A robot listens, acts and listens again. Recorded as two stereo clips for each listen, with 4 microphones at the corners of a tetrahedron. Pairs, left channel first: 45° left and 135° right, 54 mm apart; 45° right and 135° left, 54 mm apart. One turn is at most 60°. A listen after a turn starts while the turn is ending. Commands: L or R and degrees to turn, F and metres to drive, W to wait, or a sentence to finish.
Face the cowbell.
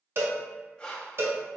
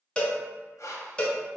R60
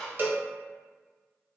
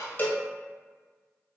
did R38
R60
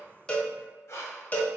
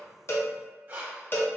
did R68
Facing the cowbell.